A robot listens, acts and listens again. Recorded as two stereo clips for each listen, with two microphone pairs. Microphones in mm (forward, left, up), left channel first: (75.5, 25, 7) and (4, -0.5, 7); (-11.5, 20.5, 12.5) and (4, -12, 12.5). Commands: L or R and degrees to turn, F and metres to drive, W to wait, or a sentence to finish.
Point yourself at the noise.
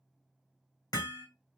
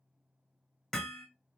L40
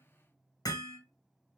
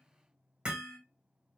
Found it: hammering, straight ahead.